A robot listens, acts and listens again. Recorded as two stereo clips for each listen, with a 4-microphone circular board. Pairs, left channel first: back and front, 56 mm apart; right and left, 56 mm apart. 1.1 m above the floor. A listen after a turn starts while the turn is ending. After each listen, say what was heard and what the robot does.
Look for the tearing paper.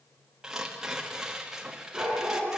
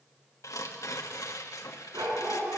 The tearing paper: 80° right. Turn 80° right.
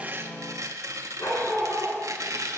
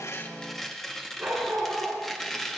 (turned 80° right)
Found it: tearing paper, straight ahead.